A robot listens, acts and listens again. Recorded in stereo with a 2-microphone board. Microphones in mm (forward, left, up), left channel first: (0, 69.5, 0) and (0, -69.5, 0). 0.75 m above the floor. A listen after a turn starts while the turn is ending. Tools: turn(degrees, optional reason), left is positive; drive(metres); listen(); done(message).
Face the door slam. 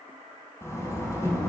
turn(degrees=20, reason="The door slam: about 20° left or 160° left.")
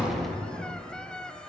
listen()
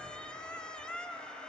done("I heard a door slam, but can't make it out now. It was about straight ahead or 140° left.")